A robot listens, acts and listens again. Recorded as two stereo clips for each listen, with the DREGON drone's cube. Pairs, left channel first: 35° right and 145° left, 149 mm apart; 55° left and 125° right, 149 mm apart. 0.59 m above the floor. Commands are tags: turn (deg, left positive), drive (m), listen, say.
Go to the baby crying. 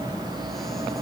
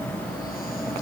<listen/>
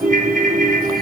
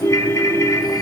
<listen/>
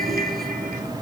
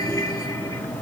<say>I can't make out a baby crying to turn to.</say>